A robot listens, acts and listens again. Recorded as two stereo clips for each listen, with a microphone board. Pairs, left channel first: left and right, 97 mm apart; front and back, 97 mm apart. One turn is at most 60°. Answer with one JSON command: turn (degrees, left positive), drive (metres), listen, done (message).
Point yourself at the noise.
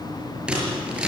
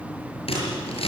{"turn": -10}
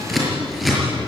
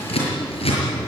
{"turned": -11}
{"done": "Found it: scissors, straight ahead, over 4 m away."}